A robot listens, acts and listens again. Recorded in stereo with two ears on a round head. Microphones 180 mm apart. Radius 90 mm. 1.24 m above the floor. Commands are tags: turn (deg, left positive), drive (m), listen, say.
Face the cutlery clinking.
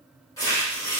<listen/>
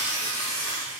<listen/>
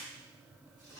<say>I can't make out cutlery clinking, only tearing paper.</say>